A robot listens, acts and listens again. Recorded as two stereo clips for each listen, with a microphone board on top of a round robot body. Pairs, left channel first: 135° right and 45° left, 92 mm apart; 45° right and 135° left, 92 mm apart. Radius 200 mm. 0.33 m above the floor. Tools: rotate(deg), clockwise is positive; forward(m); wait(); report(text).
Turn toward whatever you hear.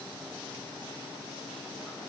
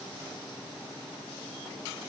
wait()
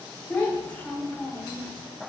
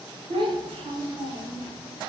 rotate(-150)
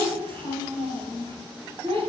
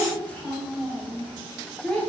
rotate(-30)
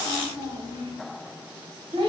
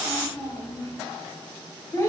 rotate(-20)
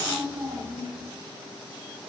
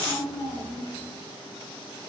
report("Found it: a child speaking, straight ahead, 1 to 2 m away.")